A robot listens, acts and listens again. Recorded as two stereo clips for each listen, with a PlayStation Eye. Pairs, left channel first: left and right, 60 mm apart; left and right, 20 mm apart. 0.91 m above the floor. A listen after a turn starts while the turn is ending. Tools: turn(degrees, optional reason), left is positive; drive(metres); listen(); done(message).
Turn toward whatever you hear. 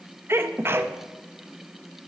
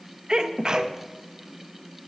turn(degrees=-45, reason="The sneeze: about 45° right or 135° right.")
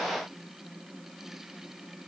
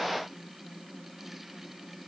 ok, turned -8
listen()
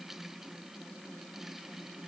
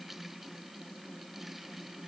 done("I heard a sneeze, but can't make it out now. It was about 35° right or 130° right.")